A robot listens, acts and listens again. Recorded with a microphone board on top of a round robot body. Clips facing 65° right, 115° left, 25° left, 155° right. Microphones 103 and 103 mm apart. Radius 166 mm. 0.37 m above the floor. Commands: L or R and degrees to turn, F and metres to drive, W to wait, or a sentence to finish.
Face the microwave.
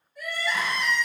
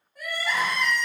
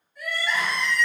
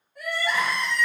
W
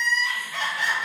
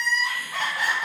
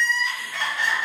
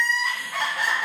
W
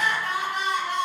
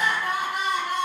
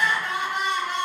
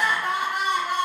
I can't make out a microwave to turn to.